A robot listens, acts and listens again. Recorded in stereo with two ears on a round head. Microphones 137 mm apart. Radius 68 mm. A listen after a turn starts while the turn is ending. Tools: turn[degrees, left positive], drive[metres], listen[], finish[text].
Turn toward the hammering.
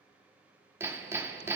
Thought: The hammering: about 15° right or 165° right.
Action: turn[-15]
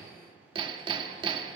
Thought: So it is at 150° right.
Action: turn[-150]
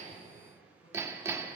Thought: The hammering is now 20° right.
Action: turn[-20]
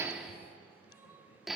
Action: finish[Found it: hammering, straight ahead.]